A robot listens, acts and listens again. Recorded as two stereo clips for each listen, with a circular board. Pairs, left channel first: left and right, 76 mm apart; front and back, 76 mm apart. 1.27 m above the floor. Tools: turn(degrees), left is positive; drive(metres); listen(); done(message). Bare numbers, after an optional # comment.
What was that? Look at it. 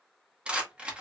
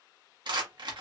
# The rattle: 165° right.
turn(-165)
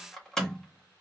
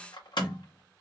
# The rattle is now 10° left.
turn(10)
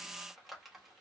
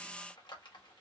listen()
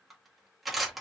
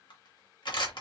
done("Facing the rattle, 1 to 2 m away.")